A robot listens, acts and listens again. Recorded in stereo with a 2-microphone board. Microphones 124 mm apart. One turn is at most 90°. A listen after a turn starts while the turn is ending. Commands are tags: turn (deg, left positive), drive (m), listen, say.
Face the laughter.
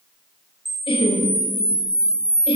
<turn deg="50"/>
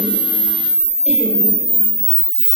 <listen/>
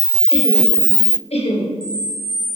<turn deg="75"/>
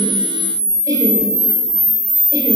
<listen/>
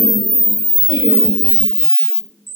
<listen/>
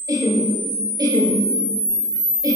<turn deg="-35"/>
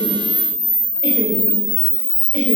<listen/>
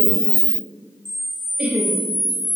<turn deg="-15"/>
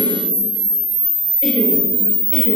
<listen/>
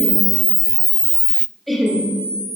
<say>Facing the laughter, 2 to 4 m away.</say>